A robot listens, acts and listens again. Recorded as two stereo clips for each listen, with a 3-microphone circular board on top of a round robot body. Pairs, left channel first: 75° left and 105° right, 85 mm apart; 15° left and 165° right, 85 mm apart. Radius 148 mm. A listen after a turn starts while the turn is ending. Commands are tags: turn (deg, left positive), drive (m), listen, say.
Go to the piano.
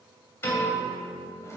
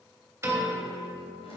<turn deg="135"/>
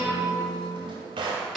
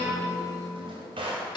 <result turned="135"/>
<turn deg="-15"/>
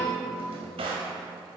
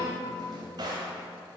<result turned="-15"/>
<drive m="1.0"/>
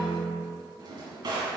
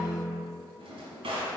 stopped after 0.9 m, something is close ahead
<say>I am next to the piano.</say>